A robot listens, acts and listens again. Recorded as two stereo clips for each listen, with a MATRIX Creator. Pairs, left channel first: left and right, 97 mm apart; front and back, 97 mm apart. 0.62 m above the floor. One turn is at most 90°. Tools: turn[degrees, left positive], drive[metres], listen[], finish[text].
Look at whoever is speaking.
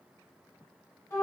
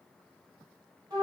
Action: listen[]
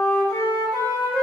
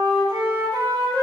Action: listen[]
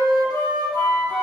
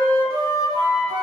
Action: finish[I can't make out anyone speaking to turn to.]